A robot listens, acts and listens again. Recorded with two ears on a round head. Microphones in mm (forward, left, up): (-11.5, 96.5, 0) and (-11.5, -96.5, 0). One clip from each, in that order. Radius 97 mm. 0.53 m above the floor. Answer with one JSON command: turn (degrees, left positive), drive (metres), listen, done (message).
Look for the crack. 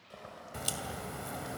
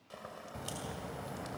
{"turn": 55}
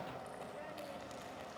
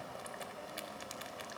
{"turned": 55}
{"listen": true}
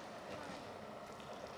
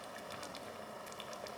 {"done": "I heard a crack, but can't make it out now. It was about straight ahead or 70° left."}